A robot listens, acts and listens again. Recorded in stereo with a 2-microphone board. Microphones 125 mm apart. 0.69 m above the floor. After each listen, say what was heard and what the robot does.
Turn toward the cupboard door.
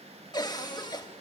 The cupboard door: about 35° left or 145° left. Turn 35° left.
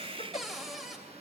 Found it: a cupboard door, straight ahead.